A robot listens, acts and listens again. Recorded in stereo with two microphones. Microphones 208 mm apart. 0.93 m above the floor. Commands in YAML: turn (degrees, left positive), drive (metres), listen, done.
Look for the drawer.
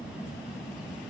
listen: true
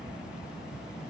listen: true
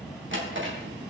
turn: -70
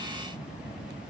listen: true
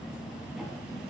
listen: true
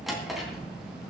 done: "Facing the drawer."